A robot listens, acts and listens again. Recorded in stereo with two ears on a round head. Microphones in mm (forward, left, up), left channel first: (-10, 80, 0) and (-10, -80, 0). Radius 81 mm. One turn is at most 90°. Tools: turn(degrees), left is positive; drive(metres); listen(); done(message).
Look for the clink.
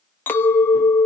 turn(degrees=30)
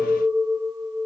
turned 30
turn(degrees=-20)
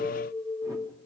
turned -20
done("Facing the clink.")